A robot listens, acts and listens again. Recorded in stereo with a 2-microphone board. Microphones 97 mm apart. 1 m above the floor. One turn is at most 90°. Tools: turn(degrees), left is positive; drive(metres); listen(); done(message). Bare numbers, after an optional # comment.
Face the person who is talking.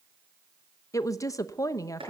# The woman speaking: about 35° left or 145° left.
turn(35)
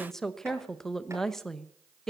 done("Found it: a woman speaking, straight ahead.")